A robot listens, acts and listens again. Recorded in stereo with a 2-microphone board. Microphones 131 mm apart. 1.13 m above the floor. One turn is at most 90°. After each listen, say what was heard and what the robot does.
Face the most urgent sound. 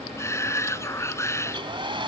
The shout: about 20° left or 160° left. Turn 20° left.
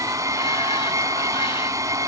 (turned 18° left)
Keep listening.
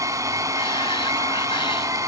Keep listening.
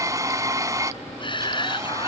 So it is at 140° left. Turn 90° left.
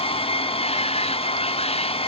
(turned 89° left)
Nothing new. It was at 50° left. Turn 50° left.
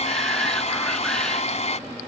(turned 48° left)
Keep listening.
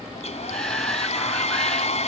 Facing where the shout came from. I can't hear it now.